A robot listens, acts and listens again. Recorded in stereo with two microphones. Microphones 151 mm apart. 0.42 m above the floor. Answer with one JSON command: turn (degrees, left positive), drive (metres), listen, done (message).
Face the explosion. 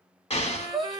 {"turn": 40}
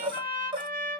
{"listen": true}
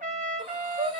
{"done": "I heard an explosion, but can't make it out now. It was about straight ahead or 100° left."}